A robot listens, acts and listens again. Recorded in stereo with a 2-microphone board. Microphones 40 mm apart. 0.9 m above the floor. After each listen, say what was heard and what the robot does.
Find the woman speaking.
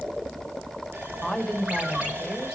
Turn 30° right.
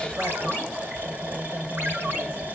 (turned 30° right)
So it is at 135° right. Turn 135° right.
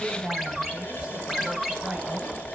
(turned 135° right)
The woman speaking is now 25° right. Turn 25° right.
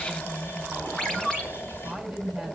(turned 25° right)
Facing the woman speaking.